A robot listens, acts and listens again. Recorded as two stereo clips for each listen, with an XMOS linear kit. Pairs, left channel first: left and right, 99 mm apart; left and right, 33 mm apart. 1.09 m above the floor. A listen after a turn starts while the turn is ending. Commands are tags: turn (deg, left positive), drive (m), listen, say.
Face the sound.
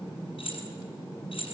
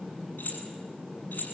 <turn deg="70"/>
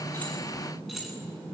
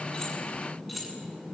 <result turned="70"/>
<say>Found it: keys jangling, straight ahead, over 4 m away.</say>